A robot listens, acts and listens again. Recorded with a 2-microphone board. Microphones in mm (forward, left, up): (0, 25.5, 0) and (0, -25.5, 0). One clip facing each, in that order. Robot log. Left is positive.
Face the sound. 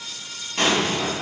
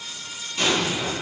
note: The explosion: about 50° left or 130° left.
cmd yaw +50
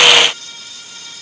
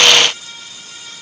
cmd idle
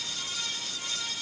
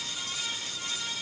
end: I heard an explosion, but can't make it out now. It was about straight ahead or 80° left.